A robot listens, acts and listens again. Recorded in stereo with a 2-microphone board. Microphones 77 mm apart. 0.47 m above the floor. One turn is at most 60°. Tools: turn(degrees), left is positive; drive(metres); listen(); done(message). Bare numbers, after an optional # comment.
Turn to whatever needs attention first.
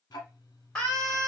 turn(30)
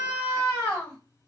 # So it is at 140° left.
turn(60)
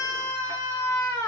# The scream is now 85° left.
turn(60)
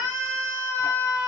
# The scream is now 20° left.
turn(20)
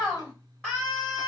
# The scream is now 10° left.
turn(10)
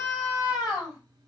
done("Facing the scream.")